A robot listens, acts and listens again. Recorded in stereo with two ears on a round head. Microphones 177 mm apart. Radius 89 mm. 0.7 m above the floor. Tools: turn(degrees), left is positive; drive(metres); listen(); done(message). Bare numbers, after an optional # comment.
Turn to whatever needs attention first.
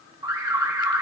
# The alarm: about 20° right or 160° right.
turn(-20)
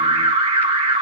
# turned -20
# So it is at 145° right.
turn(-145)
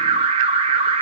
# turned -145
# The alarm is now 30° right.
turn(-30)
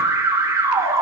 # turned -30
# The alarm is now 15° right.
turn(-15)
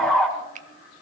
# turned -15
done("Found it: an alarm, straight ahead, 2 to 4 m away.")